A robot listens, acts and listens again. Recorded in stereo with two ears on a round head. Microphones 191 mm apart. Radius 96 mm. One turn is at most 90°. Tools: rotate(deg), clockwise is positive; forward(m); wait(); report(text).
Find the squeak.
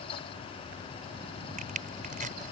wait()
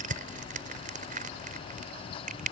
wait()
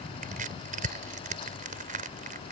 report("I can't make out a squeak, only crushing.")